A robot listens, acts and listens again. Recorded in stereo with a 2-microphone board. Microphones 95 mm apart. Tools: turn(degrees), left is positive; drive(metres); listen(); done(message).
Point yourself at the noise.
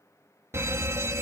turn(degrees=-30)
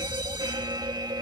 turn(degrees=-110)
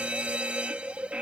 turn(degrees=-15)
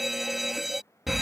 done("Found it: a fire alarm, straight ahead.")